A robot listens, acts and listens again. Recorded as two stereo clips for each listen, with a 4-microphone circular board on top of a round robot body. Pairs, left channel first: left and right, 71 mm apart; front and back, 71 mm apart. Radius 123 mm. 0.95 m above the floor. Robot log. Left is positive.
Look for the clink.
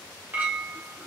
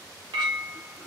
note: The clink: 155° right.
cmd yaw -155
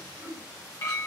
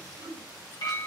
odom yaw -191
note: The clink is now 35° left.
cmd yaw +35
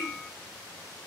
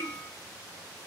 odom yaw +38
cmd idle
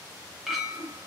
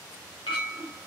end: Found it: a clink, straight ahead, under 1 m away.